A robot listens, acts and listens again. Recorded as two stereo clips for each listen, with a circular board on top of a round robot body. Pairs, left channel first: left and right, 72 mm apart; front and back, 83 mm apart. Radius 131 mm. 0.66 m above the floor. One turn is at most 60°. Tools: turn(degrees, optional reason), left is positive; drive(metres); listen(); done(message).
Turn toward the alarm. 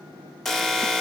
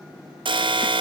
turn(degrees=60, reason="The alarm: 175° left.")
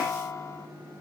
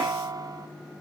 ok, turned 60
turn(degrees=60, reason="The alarm is now 135° left.")
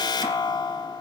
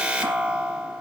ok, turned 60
turn(degrees=60, reason="The alarm is now 105° left.")
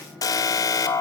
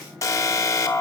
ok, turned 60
turn(degrees=50, reason="The alarm is now 50° left.")
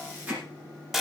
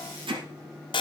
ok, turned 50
done("Facing the alarm.")